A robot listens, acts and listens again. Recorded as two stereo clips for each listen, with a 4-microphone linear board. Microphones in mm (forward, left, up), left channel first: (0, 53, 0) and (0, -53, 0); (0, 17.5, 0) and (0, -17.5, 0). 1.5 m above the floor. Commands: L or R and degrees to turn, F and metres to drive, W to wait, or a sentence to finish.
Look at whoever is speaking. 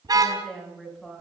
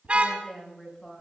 L30
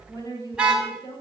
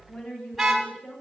L140
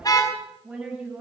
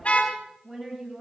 R15
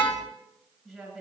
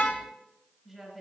Found it: a woman speaking, straight ahead, over 4 m away.